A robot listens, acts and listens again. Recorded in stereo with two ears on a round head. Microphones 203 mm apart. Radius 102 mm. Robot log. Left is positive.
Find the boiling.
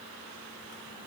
cmd idle
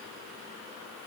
cmd idle
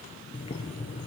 note: The boiling: about 25° left or 155° left.
cmd yaw +25
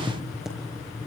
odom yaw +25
end: Facing the boiling, over 4 m away.